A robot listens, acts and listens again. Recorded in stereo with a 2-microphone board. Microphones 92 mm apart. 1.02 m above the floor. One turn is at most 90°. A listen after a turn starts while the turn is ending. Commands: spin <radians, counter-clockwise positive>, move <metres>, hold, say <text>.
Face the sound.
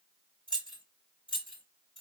spin 1.22
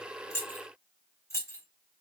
spin 0.52
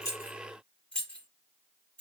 spin 0.17
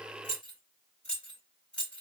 spin 0.26
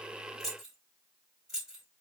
say Facing the keys jangling, 2 to 4 m away.